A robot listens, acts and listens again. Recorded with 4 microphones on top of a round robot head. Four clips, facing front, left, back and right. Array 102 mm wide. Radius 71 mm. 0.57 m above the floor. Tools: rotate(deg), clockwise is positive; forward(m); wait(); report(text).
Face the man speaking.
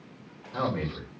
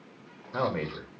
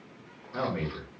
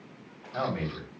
rotate(-105)
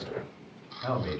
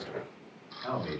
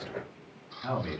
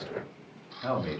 rotate(20)
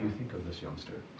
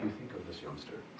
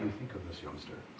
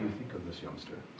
report("Found it: a man speaking, straight ahead.")